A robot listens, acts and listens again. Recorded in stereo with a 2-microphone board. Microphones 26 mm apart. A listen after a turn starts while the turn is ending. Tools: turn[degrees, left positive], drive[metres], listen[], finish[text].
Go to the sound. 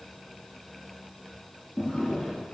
Thought: The drawer: about 35° left or 145° left.
Action: turn[35]
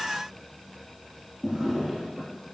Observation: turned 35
Action: drive[1.0]
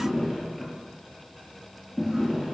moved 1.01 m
Action: drive[1.0]
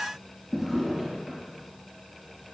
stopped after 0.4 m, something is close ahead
Action: finish[Blocked. The drawer is further on, straight ahead.]